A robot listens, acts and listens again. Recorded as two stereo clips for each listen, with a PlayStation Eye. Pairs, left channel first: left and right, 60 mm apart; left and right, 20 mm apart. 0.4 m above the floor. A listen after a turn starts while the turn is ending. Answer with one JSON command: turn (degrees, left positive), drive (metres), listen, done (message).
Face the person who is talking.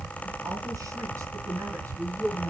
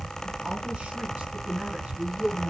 {"turn": -75}
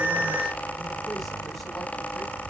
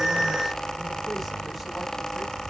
{"listen": true}
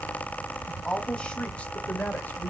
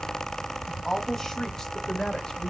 {"turn": 25}
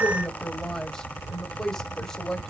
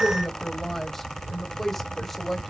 {"turn": 10}
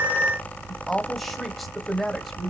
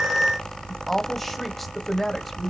{"done": "Found it: a woman speaking, straight ahead."}